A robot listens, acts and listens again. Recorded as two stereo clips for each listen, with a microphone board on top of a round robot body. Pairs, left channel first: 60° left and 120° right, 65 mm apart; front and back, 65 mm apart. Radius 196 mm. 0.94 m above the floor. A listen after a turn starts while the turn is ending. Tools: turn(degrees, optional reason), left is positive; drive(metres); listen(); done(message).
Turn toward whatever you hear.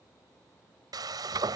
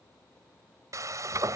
turn(degrees=-140, reason="The frying: 140° right.")
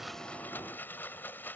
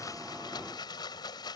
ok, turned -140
done("Facing the frying.")